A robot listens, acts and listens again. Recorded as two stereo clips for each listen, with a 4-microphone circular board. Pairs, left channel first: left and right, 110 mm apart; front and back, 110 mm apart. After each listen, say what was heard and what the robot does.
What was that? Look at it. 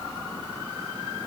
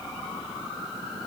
Keep listening.
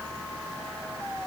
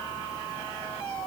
Keep listening.
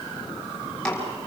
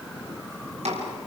The chopping: 170° left. Turn 170° left.
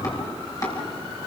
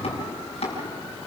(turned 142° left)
The chopping is now 30° left. Turn 30° left.
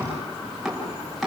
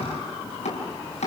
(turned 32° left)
Facing the chopping, over 4 m away.